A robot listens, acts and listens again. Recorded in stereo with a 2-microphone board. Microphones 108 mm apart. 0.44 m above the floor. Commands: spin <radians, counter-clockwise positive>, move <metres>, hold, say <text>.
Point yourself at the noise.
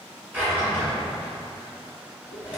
spin -0.26
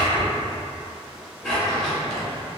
say Facing the drawer, 1 to 2 m away.